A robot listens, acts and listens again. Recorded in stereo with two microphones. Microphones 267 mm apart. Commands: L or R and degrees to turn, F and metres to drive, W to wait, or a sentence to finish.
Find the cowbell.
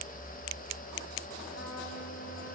W
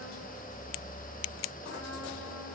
W
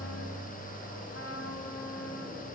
I can't make out a cowbell, only a trumpet.